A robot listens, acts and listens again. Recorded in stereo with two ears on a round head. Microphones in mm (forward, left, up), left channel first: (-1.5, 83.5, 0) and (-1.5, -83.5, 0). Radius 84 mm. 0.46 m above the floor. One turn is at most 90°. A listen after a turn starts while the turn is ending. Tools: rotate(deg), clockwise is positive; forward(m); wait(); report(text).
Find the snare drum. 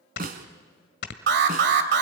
rotate(50)
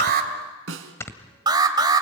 rotate(80)
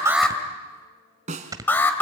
rotate(40)
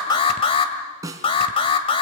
rotate(20)
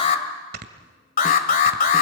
wait()
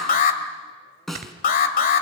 report("Facing the snare drum, 2 to 4 m away.")